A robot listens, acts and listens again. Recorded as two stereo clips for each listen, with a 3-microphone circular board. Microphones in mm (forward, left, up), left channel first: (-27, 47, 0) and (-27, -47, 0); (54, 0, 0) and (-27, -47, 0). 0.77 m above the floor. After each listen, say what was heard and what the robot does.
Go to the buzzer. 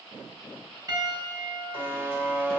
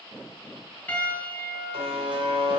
The buzzer: 160° right. Turn 160° right.
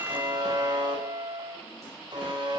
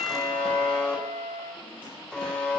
The buzzer is now 50° right. Turn 50° right.
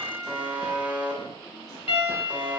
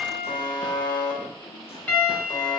The buzzer is now 15° right. Turn 15° right.
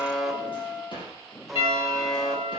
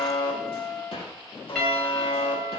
Drive 1.0 m forward.
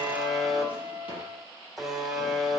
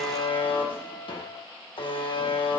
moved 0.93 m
Drive 1.0 m forward.
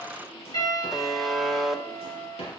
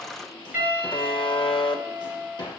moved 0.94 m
Drive 1.0 m forward.
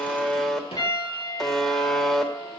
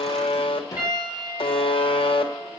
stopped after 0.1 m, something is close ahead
I am next to the buzzer.